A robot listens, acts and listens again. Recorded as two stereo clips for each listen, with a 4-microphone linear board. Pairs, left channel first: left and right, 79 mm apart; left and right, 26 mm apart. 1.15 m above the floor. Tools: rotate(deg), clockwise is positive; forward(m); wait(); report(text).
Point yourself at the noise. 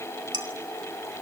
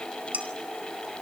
rotate(70)
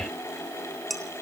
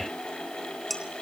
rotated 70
report("Facing the dishes clattering.")